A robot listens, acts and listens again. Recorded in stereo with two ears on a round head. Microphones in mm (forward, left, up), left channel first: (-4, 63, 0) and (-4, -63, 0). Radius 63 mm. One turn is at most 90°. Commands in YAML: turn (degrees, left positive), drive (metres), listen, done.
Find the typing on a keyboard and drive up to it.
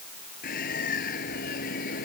listen: true
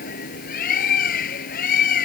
listen: true
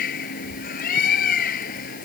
done: "I can't make out typing on a keyboard to turn to."